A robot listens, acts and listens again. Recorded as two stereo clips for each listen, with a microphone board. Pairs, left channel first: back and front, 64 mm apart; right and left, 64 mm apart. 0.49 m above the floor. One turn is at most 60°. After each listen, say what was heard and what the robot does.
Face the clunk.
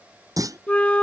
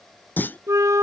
The clunk: 30° right. Turn 30° right.
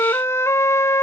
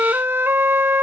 I heard a clunk from this way, but can't make it out now.